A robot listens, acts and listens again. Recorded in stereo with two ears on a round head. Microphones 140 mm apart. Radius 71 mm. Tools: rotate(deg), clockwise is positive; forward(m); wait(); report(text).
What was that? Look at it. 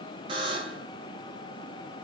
rotate(30)
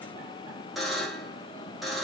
report("Found it: a buzzer, straight ahead.")